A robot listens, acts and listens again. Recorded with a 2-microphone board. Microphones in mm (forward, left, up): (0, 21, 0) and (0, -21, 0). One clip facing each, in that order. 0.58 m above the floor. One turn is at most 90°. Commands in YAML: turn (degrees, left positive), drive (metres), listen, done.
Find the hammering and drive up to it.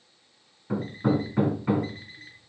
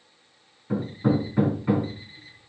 turn: 30
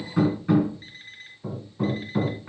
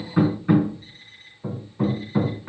turn: -15
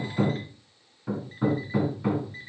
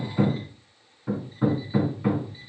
drive: 1.0
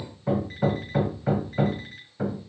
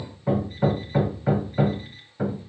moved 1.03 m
drive: 1.0
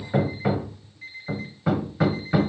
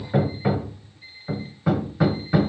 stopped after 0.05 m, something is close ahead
done: "Arrived at the hammering, straight ahead."